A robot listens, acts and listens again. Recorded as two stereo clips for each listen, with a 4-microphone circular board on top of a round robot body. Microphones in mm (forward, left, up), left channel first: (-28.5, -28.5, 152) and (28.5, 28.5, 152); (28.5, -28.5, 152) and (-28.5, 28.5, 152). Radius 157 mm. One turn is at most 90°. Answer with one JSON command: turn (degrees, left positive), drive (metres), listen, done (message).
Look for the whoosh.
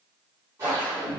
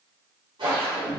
{"turn": 90}
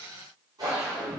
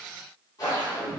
{"done": "Found it: a whoosh, straight ahead, 1 to 2 m away."}